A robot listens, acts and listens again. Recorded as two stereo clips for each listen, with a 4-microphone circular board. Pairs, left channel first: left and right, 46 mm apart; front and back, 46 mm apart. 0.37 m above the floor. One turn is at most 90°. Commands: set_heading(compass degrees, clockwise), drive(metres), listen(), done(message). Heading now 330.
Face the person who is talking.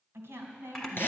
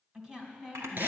set_heading(60)
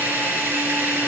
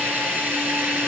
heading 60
set_heading(80)
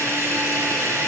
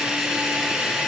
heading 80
listen()
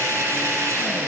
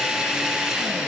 done("I heard a woman speaking from this way, but can't make it out now.")